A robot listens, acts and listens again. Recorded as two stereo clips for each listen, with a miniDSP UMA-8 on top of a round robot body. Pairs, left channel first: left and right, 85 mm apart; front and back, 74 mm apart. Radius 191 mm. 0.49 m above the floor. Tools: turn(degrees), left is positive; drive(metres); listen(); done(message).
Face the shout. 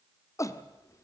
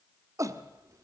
turn(degrees=140)
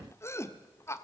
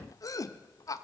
turn(degrees=35)
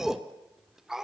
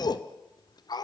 done("Found it: a shout, straight ahead.")